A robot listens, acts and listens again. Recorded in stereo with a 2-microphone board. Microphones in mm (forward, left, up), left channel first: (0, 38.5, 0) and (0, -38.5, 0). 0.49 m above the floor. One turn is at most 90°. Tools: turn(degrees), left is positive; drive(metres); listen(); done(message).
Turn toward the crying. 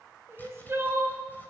turn(degrees=-35)
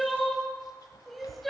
done("Found it: crying, straight ahead.")